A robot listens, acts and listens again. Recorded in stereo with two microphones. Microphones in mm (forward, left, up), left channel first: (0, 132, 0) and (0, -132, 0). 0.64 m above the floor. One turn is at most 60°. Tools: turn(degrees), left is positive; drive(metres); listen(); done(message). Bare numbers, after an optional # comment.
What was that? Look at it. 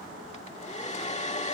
# The hair dryer: about 25° left or 155° left.
turn(25)
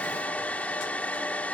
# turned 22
done("Found it: a hair dryer, straight ahead.")